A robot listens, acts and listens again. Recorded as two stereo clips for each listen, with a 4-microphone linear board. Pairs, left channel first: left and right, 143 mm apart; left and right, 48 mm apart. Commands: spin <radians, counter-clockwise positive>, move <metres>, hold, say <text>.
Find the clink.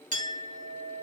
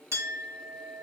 spin -1.22
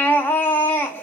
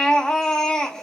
hold
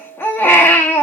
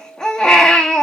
spin -0.70
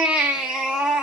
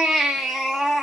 hold
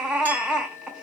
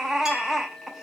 spin -0.26
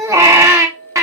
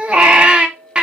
say Facing the clink.